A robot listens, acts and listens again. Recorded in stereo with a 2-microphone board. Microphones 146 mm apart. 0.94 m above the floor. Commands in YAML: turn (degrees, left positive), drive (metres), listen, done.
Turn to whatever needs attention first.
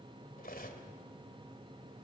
listen: true
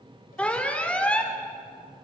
turn: 30
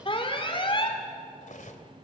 turn: 140
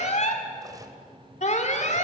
turn: 55
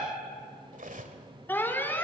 turn: 15
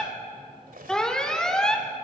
done: "Found it: an alarm, straight ahead."